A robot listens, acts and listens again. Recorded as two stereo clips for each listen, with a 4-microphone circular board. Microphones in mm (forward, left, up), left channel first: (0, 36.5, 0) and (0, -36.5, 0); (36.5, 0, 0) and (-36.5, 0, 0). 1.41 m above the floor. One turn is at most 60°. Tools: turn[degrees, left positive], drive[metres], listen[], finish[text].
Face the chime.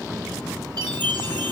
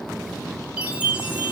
Thought: The chime: 105° right.
Action: turn[-60]
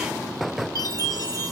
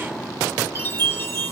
Thought: The chime is now 55° right.
Action: turn[-55]
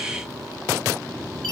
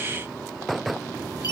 Action: listen[]
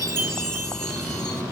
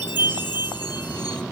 Thought: The chime is now 10° left.
Action: turn[10]
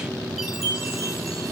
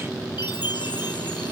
Action: finish[Found it: a chime, straight ahead, 1 to 2 m away.]